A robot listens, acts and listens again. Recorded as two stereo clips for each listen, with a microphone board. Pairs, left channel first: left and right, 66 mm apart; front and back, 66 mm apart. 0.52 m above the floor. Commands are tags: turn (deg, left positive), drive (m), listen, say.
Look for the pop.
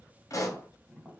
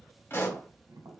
<turn deg="55"/>
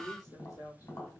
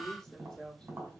<say>I heard a pop from this way, but can't make it out now.</say>